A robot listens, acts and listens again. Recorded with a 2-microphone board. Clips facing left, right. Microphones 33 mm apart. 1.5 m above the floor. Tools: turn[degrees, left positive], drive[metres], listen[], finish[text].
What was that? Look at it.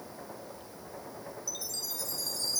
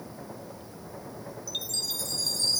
Thought: The chime: about 65° right or 115° right.
Action: turn[-65]
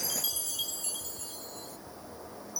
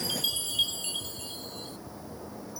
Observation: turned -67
Thought: So it is at 45° right.
Action: turn[-45]
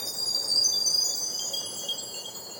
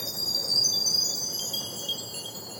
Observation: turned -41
Action: finish[Facing the chime.]